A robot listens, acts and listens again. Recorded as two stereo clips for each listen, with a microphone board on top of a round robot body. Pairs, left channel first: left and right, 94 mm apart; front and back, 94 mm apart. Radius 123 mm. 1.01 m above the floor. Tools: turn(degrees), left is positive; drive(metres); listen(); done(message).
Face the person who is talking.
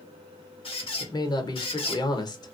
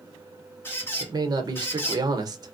turn(degrees=135)
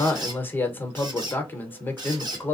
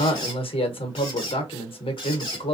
turn(degrees=20)
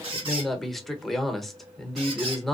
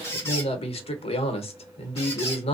done("Found it: a man speaking, straight ahead.")